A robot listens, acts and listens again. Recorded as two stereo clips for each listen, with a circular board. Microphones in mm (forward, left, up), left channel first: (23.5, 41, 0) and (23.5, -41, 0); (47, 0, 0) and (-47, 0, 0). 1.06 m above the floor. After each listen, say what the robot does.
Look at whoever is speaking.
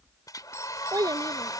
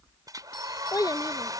Turn 50° right.
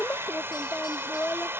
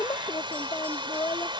Turn 30° left.
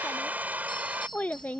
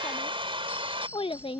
Turn 20° left.
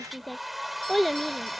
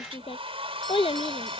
Found it: a child speaking, straight ahead.